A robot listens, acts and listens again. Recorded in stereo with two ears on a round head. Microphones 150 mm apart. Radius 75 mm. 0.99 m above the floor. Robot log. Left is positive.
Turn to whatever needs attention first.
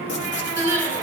note: The crying: about 20° right or 160° right.
cmd yaw -20
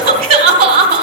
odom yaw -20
note: So it is at 140° right.
cmd yaw -140
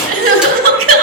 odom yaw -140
note: The crying is now 55° right.
cmd yaw -55
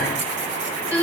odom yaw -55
note: The crying is now 15° left.
cmd yaw +15
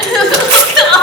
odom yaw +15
end: Facing the crying, 2 to 4 m away.